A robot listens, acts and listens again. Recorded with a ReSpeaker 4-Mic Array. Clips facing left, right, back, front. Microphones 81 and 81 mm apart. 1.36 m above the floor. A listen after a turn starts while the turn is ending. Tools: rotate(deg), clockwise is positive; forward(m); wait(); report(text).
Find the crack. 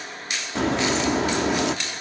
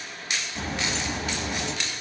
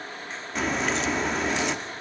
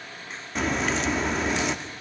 rotate(-90)
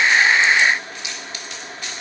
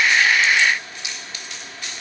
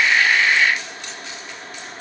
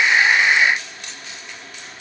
report("Facing where the crack came from. I can't hear it now.")